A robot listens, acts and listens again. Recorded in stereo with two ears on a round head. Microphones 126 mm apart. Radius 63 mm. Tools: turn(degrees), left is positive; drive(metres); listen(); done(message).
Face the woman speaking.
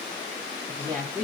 turn(degrees=30)
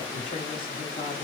listen()
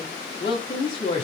turn(degrees=140)
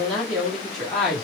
done("Facing the woman speaking, 1 to 2 m away.")